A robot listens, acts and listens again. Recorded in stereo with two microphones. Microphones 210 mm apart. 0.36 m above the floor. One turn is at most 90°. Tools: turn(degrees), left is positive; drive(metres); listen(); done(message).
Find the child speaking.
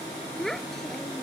turn(degrees=30)
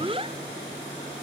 turn(degrees=-30)
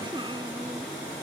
listen()
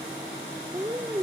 turn(degrees=-25)
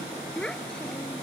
done("Found it: a child speaking, straight ahead.")